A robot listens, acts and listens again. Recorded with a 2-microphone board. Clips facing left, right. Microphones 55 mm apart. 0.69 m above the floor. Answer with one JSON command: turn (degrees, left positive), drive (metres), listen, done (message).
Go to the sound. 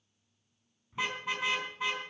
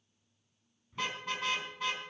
{"turn": 30}
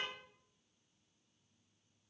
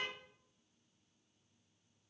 {"listen": true}
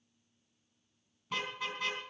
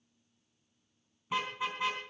{"turn": -15}
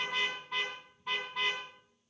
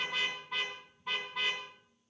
{"drive": 1.0}
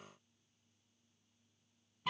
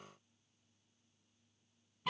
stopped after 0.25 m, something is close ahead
{"done": "Blocked. The car horn is further on, straight ahead."}